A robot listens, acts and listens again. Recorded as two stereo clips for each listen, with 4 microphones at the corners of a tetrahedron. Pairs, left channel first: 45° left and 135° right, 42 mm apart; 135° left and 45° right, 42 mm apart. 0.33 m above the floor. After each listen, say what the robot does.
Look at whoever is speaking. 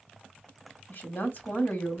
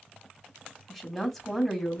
Turn 50° left.
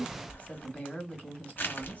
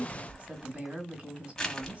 Facing the woman speaking.